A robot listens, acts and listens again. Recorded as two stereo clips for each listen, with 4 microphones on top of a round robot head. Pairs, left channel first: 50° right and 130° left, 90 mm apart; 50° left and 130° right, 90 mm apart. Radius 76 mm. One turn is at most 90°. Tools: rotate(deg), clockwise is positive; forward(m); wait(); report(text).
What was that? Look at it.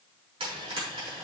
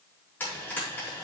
rotate(-90)
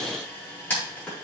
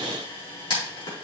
rotate(-20)
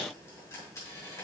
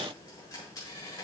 wait()
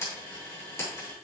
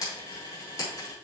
report("Found it: frying, straight ahead, over 4 m away.")